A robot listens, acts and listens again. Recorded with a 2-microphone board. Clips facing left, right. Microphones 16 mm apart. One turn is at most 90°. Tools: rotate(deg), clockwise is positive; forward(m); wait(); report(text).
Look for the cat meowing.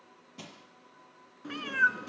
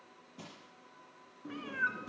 rotate(-60)
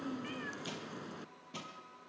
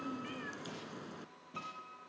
report("Found it: a cat meowing, straight ahead.")